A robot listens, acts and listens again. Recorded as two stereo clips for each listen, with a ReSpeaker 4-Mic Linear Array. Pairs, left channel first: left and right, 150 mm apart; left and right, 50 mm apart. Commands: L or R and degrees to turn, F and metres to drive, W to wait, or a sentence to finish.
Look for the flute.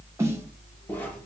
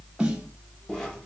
W
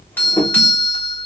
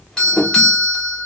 W
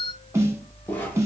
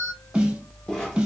I can't make out a flute to turn to.